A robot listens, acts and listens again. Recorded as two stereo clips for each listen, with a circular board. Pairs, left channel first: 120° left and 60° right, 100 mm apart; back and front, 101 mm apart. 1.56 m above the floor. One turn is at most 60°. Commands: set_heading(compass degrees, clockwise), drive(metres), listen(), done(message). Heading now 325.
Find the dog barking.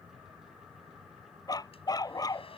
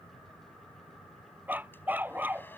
set_heading(265)
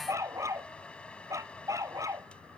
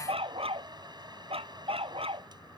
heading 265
done("Facing the dog barking.")